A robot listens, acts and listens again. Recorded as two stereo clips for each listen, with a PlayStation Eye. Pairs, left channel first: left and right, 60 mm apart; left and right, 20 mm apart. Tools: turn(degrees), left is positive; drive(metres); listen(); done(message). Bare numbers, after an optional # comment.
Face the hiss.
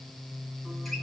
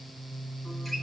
listen()
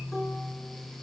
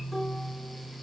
listen()
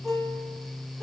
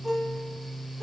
done("I can't make out a hiss, only a guitar.")